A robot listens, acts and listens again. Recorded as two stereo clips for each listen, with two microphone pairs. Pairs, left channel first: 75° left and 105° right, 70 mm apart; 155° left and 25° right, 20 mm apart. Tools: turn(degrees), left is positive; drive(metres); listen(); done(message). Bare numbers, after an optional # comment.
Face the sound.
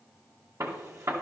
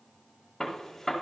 # The gunshot: 135° right.
turn(-135)
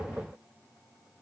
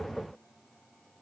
done("Facing where the gunshot came from. I can't hear it now.")